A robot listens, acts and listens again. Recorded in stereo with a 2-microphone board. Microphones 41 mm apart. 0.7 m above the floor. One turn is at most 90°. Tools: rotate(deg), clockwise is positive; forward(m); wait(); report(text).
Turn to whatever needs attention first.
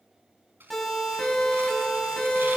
rotate(-30)
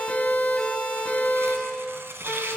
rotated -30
rotate(-90)
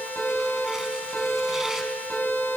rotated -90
rotate(-65)
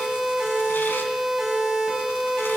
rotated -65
rotate(10)
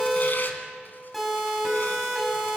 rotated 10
report("Found it: a siren, straight ahead, over 4 m away.")